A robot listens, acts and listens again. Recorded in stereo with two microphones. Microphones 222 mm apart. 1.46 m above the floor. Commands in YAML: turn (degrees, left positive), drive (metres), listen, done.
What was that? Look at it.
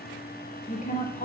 turn: 35
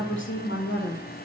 turn: 105
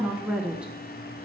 done: "Found it: a woman speaking, straight ahead."